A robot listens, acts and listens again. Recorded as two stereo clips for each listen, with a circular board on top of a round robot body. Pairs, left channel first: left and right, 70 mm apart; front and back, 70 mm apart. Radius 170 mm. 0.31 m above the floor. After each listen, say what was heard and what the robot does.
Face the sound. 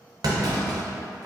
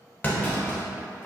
The clunk: 65° right. Turn 65° right.
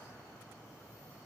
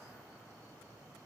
Facing where the clunk came from. I can't hear it now.